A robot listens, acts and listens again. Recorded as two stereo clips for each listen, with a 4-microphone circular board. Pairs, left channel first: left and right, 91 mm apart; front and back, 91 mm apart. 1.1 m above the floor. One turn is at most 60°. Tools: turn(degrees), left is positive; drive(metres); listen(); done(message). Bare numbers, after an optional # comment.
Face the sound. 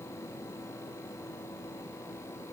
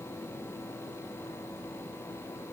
listen()
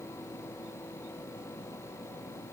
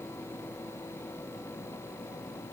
listen()
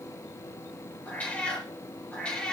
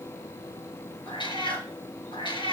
# The cat meowing: 10° left.
turn(10)
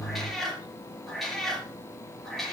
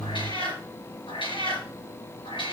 done("Facing the cat meowing, over 4 m away.")